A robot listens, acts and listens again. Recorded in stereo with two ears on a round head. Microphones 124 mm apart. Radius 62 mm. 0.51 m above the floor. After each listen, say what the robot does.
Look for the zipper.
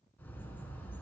Keep listening.
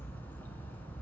Keep listening.
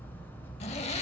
Turn 45° left.
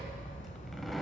Found it: a zipper, straight ahead.